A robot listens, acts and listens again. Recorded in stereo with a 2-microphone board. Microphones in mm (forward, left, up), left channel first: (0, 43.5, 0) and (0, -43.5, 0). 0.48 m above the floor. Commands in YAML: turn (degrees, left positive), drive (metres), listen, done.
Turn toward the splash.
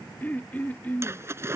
turn: -30
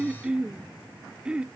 listen: true
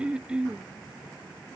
done: "I heard a splash, but can't make it out now. It was about straight ahead or 120° right."